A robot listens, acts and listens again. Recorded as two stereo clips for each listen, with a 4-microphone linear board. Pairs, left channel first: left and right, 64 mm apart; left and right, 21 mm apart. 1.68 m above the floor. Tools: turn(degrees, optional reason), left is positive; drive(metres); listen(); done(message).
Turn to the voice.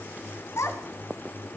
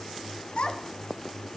turn(degrees=45, reason="The child speaking: about 45° left or 135° left.")
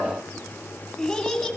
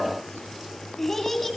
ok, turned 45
done("Facing the child speaking.")